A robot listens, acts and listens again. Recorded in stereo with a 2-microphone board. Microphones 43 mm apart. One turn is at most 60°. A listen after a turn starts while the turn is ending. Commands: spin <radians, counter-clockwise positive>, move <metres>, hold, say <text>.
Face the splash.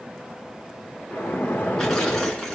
spin 0.79
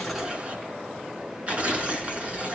hold
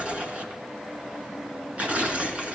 say I heard a splash, but can't make it out now. It was about straight ahead or 90° left.